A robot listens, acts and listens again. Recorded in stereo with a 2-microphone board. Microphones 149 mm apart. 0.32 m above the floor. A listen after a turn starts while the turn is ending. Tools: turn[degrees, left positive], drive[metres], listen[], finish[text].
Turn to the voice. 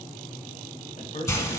Thought: The man speaking: about 60° left or 120° left.
Action: turn[60]
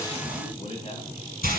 Thought: So it is at 45° left.
Action: turn[45]
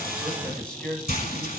Action: finish[Facing the man speaking, 1 to 2 m away.]